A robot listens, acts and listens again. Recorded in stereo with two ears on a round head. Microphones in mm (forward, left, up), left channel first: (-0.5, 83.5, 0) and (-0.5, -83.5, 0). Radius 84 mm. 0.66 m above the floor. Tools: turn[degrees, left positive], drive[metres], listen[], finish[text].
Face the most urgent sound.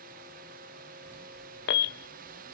Thought: The alarm: about 65° left or 115° left.
Action: turn[65]
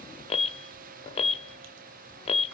Thought: So it is at 35° left.
Action: turn[35]
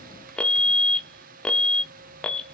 Action: finish[Facing the alarm.]